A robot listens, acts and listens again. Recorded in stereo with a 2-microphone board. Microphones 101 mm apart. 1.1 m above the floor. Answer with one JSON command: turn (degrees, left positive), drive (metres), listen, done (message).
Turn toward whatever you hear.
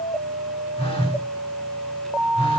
{"turn": 90}
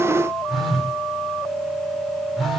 {"done": "Found it: a phone buzzing, straight ahead."}